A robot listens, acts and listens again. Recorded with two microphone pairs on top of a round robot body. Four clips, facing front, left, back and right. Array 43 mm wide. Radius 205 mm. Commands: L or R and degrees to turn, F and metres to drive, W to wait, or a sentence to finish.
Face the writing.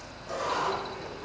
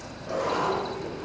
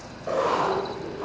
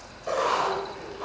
R110
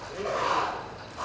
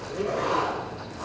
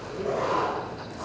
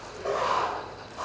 R40
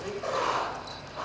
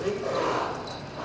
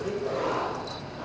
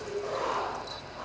Found it: writing, straight ahead, 2 to 4 m away.